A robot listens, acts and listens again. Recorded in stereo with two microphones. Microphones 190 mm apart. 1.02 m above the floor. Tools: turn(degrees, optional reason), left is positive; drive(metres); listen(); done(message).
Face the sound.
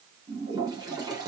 turn(degrees=-20, reason="The toilet flushing: about 20° right or 160° right.")
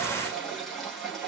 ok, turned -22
done("Facing the toilet flushing.")